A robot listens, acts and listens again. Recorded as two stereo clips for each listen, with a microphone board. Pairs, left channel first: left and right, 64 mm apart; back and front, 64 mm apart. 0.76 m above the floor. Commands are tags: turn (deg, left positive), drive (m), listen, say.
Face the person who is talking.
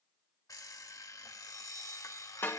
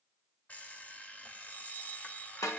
<listen/>
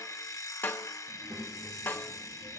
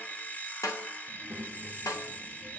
<turn deg="-80"/>
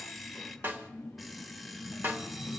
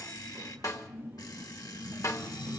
<turn deg="30"/>
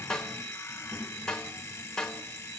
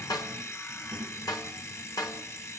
<turn deg="-15"/>
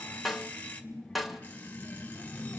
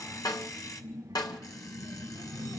<say>Facing the child speaking.</say>